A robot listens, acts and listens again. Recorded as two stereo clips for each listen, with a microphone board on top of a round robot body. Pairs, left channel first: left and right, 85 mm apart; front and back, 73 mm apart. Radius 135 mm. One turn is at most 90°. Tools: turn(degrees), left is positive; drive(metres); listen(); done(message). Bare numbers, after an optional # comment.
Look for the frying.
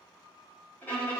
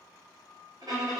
listen()
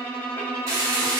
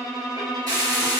# The frying: 145° right.
turn(-90)
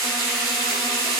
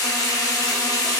# The frying is now 35° right.
turn(-35)
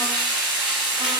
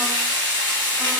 done("Facing the frying, 1 to 2 m away.")